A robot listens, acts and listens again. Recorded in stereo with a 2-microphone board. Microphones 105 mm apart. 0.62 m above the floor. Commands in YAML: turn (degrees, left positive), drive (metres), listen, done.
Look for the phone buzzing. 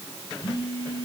turn: 50
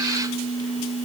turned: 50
turn: 80
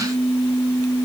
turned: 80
done: "Facing the phone buzzing."